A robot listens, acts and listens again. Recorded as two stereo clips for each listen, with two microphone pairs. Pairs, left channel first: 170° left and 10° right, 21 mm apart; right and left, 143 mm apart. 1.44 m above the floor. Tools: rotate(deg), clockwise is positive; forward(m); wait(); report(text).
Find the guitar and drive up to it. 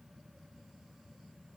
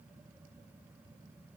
wait()
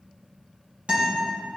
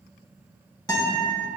rotate(30)
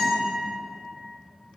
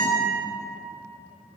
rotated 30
forward(1.0)
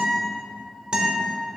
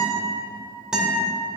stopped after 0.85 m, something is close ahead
report("Arrived at the guitar, straight ahead.")